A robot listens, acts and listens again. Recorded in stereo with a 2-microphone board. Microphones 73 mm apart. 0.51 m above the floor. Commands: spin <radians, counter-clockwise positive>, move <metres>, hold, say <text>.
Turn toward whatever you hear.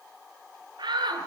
spin -1.57
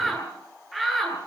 say Found it: a shout, straight ahead, over 4 m away.